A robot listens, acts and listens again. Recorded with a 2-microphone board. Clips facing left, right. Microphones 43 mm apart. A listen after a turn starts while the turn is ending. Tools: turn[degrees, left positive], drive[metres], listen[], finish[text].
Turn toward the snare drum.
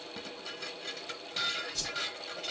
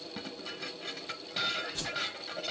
Action: listen[]
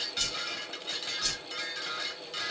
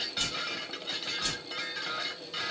Action: listen[]
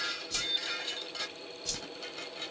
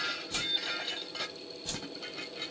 Action: finish[I can't make out a snare drum, only a whoosh and dishes clattering.]